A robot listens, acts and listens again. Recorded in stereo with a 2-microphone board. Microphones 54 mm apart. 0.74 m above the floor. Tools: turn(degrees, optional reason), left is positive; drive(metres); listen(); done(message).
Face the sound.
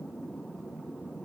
listen()
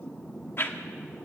turn(degrees=45, reason="The whoosh: about 45° left or 135° left.")
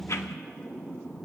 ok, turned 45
listen()
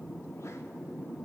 listen()
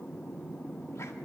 done("I heard a whoosh, but can't make it out now. It was about straight ahead or 90° left.")